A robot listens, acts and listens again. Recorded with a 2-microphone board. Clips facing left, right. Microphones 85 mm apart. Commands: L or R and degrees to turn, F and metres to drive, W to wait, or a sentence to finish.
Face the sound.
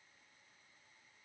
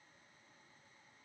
W
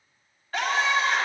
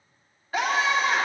R30
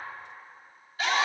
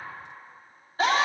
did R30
R140
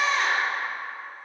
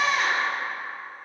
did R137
Found it: a scream, straight ahead.